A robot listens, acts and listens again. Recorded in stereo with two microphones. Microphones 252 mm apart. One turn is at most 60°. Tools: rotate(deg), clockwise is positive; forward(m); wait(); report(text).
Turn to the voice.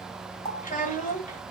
rotate(-30)
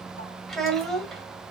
report("Found it: a child speaking, straight ahead, 1 to 2 m away.")